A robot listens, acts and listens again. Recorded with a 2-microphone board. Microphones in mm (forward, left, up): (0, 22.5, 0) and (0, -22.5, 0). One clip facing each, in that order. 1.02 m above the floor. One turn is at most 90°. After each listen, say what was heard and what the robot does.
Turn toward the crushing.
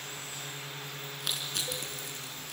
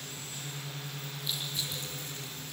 The crushing: about 70° left or 110° left. Turn 70° left.
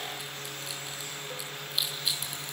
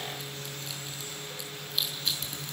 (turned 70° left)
Facing the crushing.